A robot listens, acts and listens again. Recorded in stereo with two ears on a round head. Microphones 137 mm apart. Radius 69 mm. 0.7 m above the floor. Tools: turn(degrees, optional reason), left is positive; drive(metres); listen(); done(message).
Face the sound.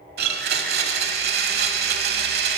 turn(degrees=-75, reason="The blender: about 75° right or 105° right.")
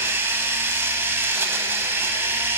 turn(degrees=-15, reason="So it is at 15° right.")
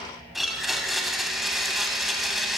done("Found it: a blender, straight ahead, 1 to 2 m away.")